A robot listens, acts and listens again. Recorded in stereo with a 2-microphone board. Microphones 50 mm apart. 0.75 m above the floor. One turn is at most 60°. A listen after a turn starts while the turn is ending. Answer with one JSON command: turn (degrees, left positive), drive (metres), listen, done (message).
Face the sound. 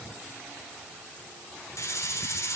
{"turn": 60}
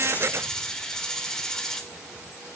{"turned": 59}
{"turn": 10}
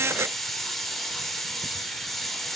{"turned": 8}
{"done": "Found it: a hiss, straight ahead, 1 to 2 m away."}